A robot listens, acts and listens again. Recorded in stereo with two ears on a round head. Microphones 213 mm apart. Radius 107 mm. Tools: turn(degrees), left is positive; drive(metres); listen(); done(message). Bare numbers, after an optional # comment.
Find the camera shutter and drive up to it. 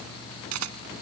# The camera shutter: about 70° right or 110° right.
turn(-70)
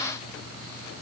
listen()
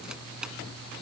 listen()
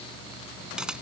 done("I heard a camera shutter, but can't make it out now. It was about straight ahead or 40° right. I did not reach it.")